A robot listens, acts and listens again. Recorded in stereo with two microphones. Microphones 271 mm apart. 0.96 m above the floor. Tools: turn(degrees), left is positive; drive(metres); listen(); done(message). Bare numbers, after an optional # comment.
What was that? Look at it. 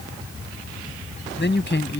# The man speaking: about 40° left or 140° left.
turn(40)
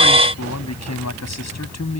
# So it is at 100° left.
turn(100)
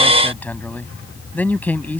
done("Facing the man speaking.")